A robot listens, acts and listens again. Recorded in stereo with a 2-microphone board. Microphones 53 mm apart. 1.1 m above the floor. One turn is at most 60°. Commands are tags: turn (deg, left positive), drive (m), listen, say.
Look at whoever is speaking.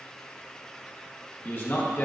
<turn deg="40"/>
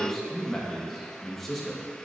<say>Facing the man speaking, 1 to 2 m away.</say>